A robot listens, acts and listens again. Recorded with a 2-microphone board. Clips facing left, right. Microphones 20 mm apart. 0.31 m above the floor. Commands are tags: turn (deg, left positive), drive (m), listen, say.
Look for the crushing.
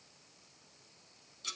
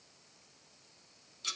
<listen/>
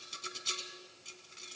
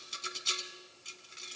<listen/>
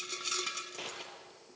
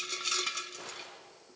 <turn deg="60"/>
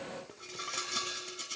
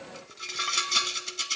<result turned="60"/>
<listen/>
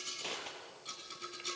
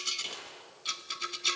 <turn deg="60"/>
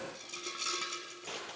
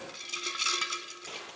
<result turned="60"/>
<say>Found it: crushing, straight ahead.</say>